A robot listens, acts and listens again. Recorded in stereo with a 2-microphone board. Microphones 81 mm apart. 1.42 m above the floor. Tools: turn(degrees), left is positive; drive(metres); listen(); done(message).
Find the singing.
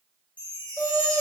turn(degrees=-25)
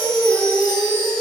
turn(degrees=-120)
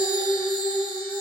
turn(degrees=35)
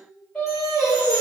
turn(degrees=20)
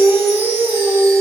done("Found it: singing, straight ahead.")